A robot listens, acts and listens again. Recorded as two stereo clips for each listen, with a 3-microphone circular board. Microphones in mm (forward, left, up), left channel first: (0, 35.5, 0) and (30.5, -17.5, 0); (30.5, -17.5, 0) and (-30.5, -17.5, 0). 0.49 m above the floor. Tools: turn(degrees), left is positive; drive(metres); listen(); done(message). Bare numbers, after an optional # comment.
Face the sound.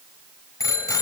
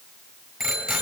# The bicycle bell: 95° left.
turn(95)
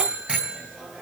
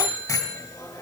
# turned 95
# The bicycle bell is now 10° left.
turn(10)
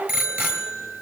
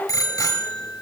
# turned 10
done("Facing the bicycle bell.")